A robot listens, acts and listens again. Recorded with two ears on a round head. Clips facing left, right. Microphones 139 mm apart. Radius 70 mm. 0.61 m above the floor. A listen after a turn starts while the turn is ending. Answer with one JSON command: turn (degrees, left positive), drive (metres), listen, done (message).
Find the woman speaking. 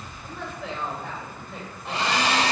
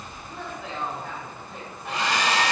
{"turn": 70}
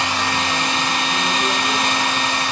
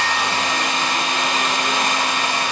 {"listen": true}
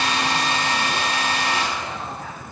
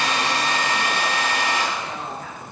{"listen": true}
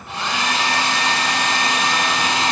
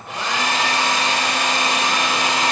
{"done": "I heard a woman speaking, but can't make it out now. It was about straight ahead or 40° left."}